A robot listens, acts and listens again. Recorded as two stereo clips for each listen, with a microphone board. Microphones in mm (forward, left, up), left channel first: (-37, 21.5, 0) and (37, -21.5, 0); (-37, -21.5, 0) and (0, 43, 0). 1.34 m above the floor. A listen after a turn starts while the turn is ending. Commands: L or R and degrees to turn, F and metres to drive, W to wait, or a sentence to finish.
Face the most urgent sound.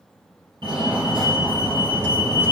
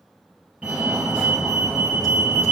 R10
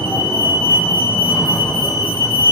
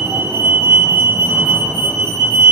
Found it: a fire alarm, straight ahead, 2 to 4 m away.